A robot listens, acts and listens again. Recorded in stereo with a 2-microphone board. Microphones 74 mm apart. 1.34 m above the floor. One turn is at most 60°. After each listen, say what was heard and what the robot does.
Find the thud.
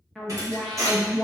The thud: about 50° right or 130° right. Turn 50° right.
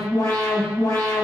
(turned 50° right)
Keep listening.
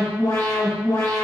I heard a thud, but can't make it out now. It was about straight ahead or 80° right.